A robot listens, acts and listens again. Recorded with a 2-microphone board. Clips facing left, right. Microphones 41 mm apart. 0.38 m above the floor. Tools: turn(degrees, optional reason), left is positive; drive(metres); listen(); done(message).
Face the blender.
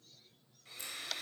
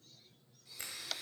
turn(degrees=45, reason="The blender: about 45° left or 135° left.")
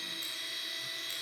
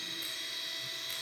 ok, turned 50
done("Found it: a blender, straight ahead.")